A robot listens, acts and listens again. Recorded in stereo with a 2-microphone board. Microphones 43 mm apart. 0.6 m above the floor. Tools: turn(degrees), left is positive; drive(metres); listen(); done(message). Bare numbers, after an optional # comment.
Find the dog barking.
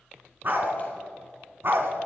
# The dog barking: about 55° right or 125° right.
turn(-55)
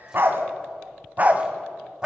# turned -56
# So it is at 15° right.
turn(-15)
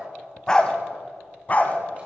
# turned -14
# The dog barking is now 40° left.
turn(40)
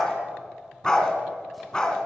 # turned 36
# The dog barking is now 20° left.
turn(20)
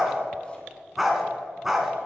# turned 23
done("Facing the dog barking.")